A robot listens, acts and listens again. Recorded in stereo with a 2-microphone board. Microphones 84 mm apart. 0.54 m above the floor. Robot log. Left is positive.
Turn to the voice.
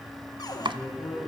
note: The man speaking: about 45° left or 135° left.
cmd yaw +45
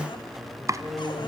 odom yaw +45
end: Found it: a man speaking, straight ahead.